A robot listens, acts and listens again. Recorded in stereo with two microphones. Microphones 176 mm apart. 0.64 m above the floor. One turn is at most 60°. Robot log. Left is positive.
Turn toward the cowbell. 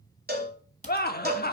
note: The cowbell: about 65° right or 115° right.
cmd yaw -60
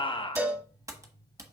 note: So it is at 10° right.
cmd yaw -10
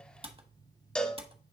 end: Facing the cowbell.